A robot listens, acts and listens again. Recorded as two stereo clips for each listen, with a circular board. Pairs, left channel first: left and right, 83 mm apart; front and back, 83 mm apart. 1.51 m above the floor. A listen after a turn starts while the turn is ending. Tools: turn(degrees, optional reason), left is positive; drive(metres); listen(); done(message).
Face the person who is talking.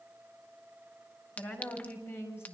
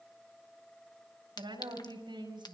turn(degrees=155, reason="The woman speaking: 155° left.")
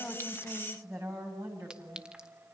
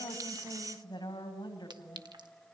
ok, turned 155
turn(degrees=-40, reason="The woman speaking is now 40° right.")
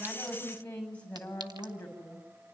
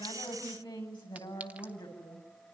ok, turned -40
turn(degrees=20, reason="The woman speaking is now 20° left.")
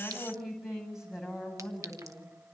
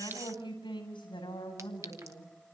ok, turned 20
done("Facing the woman speaking.")